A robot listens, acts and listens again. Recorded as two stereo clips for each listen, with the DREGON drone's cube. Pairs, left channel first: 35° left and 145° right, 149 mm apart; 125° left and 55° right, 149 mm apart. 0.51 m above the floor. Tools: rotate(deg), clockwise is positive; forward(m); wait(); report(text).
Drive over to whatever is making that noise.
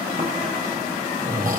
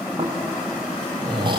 rotate(115)
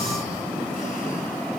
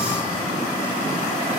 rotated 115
wait()
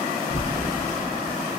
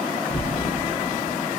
forward(1.0)
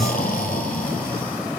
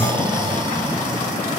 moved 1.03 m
forward(1.0)
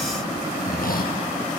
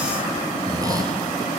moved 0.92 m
rotate(-10)
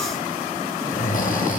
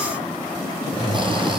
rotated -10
forward(1.0)
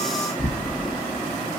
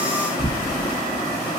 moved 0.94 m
forward(1.0)
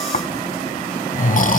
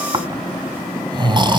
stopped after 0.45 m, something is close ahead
report("Arrived at the snoring, straight ahead.")